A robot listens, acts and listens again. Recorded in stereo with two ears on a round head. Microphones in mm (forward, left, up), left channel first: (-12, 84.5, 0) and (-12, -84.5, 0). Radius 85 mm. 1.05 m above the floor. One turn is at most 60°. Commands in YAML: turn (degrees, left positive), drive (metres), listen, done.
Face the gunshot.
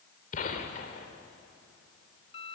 turn: 40
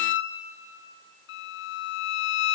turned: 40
listen: true
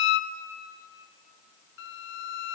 done: "I heard a gunshot, but can't make it out now. It was about straight ahead or 100° left."